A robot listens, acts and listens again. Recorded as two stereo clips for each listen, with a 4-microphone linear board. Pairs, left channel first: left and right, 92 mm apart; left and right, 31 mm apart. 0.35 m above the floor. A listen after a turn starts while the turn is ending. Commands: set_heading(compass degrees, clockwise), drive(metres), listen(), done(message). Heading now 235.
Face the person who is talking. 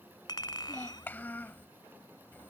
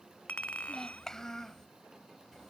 set_heading(215)
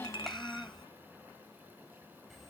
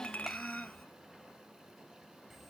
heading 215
done("Found it: a child speaking, straight ahead.")